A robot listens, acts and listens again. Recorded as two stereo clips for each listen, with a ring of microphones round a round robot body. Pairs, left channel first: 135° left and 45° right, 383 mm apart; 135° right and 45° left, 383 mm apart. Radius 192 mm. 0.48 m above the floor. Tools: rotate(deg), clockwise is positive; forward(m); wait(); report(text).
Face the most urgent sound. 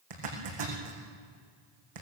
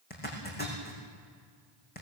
wait()
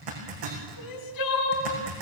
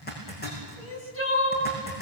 rotate(-170)
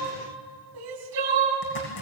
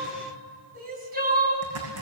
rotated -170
rotate(20)
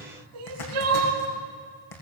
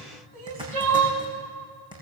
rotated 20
report("Facing the crying, 2 to 4 m away.")